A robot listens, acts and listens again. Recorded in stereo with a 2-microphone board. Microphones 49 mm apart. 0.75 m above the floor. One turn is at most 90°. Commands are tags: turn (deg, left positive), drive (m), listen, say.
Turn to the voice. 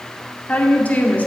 <turn deg="30"/>
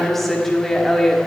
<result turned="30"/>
<say>Facing the woman speaking, 1 to 2 m away.</say>